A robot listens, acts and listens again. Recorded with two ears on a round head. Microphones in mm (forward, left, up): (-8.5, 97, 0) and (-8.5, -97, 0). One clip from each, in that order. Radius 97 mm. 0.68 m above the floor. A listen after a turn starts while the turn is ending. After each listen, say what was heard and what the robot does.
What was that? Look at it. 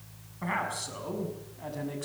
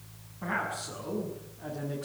The man speaking: about 60° left or 120° left. Turn 60° left.
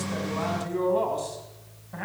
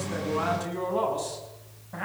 Found it: a man speaking, straight ahead.